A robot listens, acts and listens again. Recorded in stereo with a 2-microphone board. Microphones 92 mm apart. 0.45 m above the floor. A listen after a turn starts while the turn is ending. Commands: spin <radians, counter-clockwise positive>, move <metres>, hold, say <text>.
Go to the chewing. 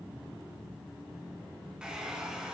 hold
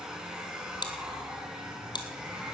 spin 0.87
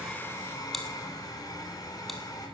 hold
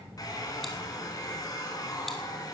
hold
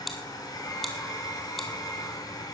move 1.0
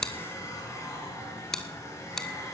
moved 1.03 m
move 1.0
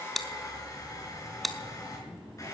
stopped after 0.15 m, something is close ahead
say I am next to the chewing.